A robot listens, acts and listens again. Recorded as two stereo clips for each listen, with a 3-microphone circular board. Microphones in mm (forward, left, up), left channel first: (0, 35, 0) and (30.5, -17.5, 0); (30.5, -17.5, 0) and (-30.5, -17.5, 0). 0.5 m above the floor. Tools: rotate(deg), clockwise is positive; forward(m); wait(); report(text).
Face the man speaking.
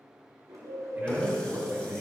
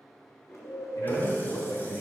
rotate(15)
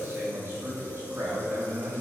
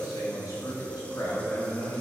rotate(15)
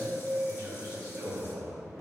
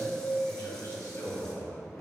rotate(10)
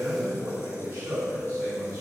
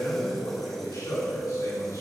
report("Facing the man speaking.")